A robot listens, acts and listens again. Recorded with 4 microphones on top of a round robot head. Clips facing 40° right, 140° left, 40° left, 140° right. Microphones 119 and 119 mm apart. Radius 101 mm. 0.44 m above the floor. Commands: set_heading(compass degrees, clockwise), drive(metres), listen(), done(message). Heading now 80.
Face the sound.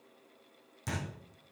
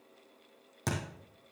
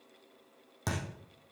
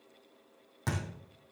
set_heading(320)
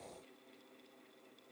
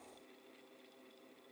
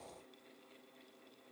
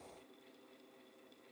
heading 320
done("Facing where the thud came from. I can't hear it now.")